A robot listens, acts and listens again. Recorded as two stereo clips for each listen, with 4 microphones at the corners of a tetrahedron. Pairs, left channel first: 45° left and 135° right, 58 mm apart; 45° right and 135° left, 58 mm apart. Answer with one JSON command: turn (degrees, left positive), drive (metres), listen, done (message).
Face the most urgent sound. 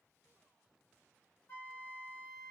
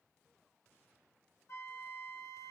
{"listen": true}
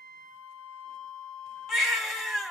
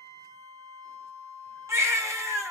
{"turn": 140}
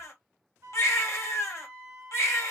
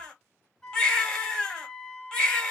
{"turn": 35}
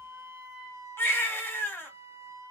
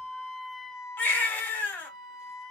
{"turn": 15}
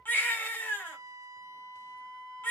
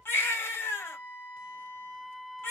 {"done": "Found it: a baby crying, straight ahead, 1 to 2 m away."}